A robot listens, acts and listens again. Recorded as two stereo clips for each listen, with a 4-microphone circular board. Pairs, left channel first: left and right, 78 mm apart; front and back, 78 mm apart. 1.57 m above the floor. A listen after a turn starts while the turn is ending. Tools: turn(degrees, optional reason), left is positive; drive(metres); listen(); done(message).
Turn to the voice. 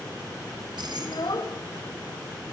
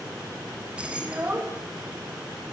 turn(degrees=115, reason="The child speaking: 115° left.")
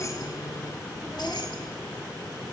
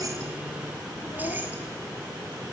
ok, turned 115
listen()
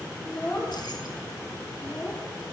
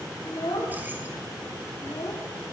turn(degrees=15, reason="The child speaking is now 15° left.")
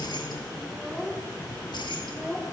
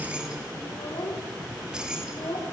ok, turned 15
done("Found it: a child speaking, straight ahead.")